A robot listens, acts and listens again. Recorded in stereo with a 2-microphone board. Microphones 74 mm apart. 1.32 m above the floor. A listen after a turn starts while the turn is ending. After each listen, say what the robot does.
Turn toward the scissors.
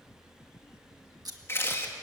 Turn 60° right.
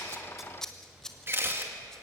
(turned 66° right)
Facing the scissors.